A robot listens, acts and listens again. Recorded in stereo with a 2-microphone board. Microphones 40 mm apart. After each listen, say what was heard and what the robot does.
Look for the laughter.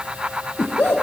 The laughter: about 60° left or 120° left. Turn 60° left.
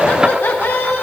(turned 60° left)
So it is at 60° left. Turn 60° left.
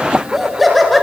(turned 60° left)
Facing the laughter.